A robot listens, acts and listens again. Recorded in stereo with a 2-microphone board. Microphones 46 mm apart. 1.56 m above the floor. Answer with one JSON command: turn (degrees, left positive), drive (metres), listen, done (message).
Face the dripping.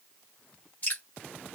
{"turn": 35}
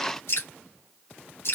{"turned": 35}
{"turn": 110}
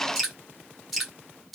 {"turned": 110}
{"done": "Found it: dripping, straight ahead."}